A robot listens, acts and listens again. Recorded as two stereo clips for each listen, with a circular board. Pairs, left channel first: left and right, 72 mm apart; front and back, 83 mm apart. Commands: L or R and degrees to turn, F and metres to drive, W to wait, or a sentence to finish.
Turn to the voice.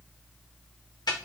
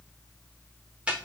W
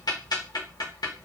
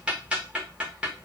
W
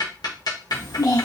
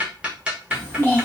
L65
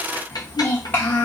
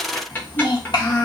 L30
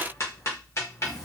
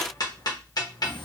Found it: a child speaking, straight ahead, 1 to 2 m away.